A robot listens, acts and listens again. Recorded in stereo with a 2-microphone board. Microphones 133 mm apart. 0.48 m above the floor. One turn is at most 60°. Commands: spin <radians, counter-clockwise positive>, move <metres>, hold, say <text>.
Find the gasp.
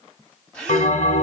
spin 0.52
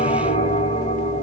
hold
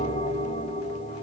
say I heard a gasp, but can't make it out now. It was about 25° right or 145° left.